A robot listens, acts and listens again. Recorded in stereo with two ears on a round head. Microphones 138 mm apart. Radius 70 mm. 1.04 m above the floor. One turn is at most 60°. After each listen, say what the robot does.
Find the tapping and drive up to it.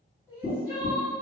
Turn 35° left.
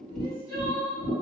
Drive 1.0 m forward.
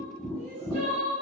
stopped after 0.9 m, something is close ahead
I am next to the tapping.